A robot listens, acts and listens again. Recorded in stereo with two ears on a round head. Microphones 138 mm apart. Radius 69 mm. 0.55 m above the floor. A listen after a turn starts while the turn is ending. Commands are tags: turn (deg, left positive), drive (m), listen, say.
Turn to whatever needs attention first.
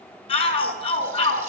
<turn deg="35"/>
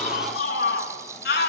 <turn deg="105"/>
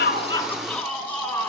<turn deg="10"/>
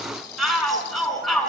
<say>Found it: a shout, straight ahead, over 4 m away.</say>